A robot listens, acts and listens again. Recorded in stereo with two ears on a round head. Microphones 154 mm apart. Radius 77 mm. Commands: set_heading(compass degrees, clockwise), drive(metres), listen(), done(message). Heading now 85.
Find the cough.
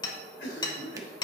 set_heading(15)
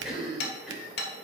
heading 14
done("Found it: a cough, straight ahead, 2 to 4 m away.")